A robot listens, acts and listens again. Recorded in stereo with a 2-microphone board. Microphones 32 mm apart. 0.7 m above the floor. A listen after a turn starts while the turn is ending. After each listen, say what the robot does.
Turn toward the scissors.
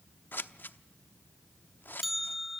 Turn 65° left.
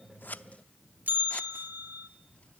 Keep listening.
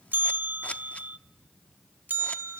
Keep listening.
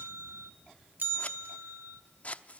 Turn 40° left.
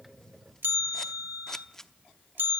Turn 15° left.
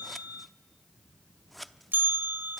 Found it: scissors, straight ahead.